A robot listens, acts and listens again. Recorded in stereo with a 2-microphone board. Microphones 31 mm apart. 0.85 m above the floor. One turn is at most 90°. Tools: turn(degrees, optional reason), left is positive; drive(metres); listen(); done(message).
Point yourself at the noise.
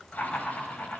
turn(degrees=60, reason="The laughter: about 60° left or 120° left.")
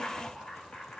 turn(degrees=60, reason="So it is at 60° left.")
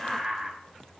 done("Found it: laughter, straight ahead.")